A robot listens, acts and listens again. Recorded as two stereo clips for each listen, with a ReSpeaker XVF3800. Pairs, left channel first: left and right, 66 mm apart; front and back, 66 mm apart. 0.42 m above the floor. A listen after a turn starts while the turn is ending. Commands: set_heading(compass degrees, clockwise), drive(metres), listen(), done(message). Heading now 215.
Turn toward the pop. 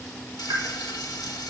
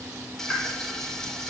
set_heading(295)
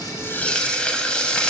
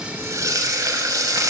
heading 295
done("I heard a pop from this way, but can't make it out now.")